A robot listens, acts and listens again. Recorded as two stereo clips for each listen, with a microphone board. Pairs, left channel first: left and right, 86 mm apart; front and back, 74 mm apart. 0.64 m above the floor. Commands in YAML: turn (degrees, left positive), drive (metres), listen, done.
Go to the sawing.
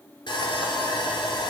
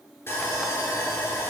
turn: 55
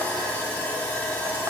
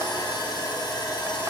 turn: 15
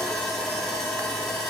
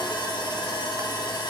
drive: 1.0
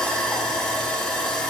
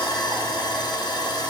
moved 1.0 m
drive: 1.0
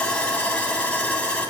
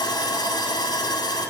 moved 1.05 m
turn: 15
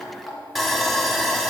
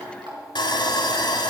drive: 1.0
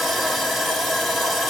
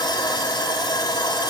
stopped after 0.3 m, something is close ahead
done: "I am next to the sawing."